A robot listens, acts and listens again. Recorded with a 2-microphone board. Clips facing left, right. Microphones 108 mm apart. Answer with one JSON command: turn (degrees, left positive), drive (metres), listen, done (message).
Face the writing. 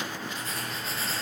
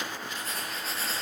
{"turn": 30}
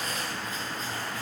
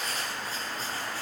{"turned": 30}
{"turn": -35}
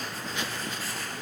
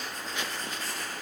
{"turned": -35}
{"done": "Found it: writing, straight ahead."}